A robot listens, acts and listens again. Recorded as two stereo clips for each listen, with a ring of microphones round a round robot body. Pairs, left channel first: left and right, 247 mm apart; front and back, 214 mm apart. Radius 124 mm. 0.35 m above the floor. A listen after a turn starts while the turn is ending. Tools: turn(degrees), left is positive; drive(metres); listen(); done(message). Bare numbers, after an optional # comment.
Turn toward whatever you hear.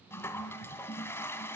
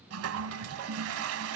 # The toilet flushing: 170° left.
turn(170)
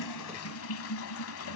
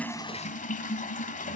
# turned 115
# The toilet flushing is now 55° left.
turn(55)
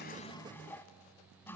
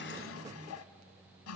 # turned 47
# The toilet flushing is now 10° left.
turn(10)
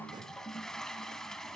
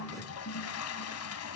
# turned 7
done("Found it: a toilet flushing, straight ahead.")